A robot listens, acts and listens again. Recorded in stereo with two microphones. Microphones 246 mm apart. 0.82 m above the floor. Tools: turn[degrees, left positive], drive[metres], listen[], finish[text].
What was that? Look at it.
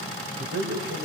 Thought: The man speaking: about 50° right or 130° right.
Action: turn[-50]
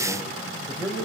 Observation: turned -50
Thought: So it is at 10° right.
Action: turn[-10]
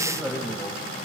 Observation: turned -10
Action: finish[Facing the man speaking.]